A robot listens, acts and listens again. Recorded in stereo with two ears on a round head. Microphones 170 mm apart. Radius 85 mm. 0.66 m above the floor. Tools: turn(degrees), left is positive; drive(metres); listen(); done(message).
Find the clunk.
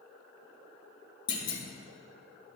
turn(degrees=25)
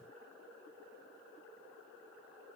listen()
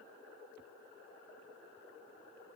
done("I heard a clunk, but can't make it out now. It was about straight ahead or 130° left.")